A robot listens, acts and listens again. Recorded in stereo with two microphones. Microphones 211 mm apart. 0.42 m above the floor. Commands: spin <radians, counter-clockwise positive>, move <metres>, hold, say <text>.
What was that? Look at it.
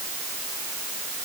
hold
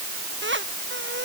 spin -1.13
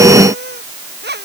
spin -0.96
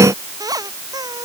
spin -0.26
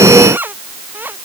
spin -0.17
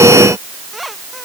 say Found it: a squeak, straight ahead.